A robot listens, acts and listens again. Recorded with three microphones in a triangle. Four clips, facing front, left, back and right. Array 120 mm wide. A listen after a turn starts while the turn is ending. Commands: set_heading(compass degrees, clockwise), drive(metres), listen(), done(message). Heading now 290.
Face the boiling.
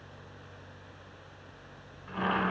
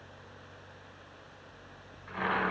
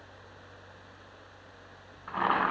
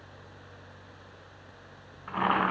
set_heading(65)
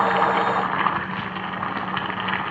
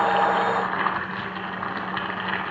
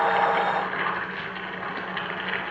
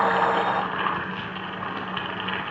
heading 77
set_heading(67)
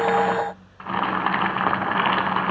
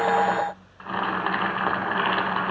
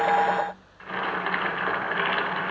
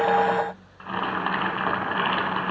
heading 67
done("Found it: boiling, straight ahead, 1 to 2 m away.")